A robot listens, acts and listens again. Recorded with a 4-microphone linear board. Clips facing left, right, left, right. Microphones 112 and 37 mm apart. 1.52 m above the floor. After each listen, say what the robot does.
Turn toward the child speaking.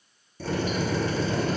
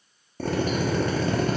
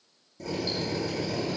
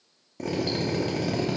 Keep listening.
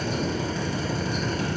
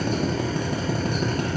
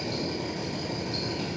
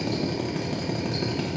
Keep listening.
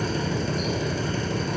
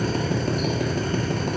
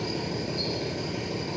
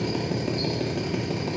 I can't make out a child speaking to turn to.